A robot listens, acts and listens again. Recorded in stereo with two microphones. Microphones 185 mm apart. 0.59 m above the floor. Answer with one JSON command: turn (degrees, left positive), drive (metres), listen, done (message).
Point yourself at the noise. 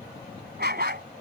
{"turn": -65}
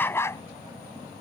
{"turn": 15}
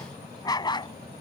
{"turn": 25}
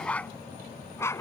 {"turn": 15}
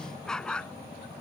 {"done": "Found it: a dog barking, straight ahead."}